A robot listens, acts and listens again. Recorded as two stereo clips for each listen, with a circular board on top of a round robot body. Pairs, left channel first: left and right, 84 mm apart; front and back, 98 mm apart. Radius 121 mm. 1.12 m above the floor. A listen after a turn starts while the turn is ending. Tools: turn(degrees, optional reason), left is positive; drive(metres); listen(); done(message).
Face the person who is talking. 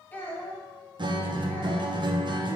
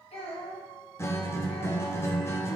turn(degrees=20, reason="The child speaking: 20° left.")
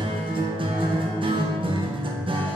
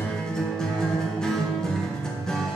listen()
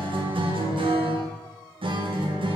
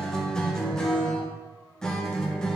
listen()
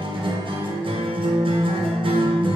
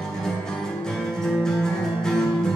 done("I heard a child speaking from this way, but can't make it out now.")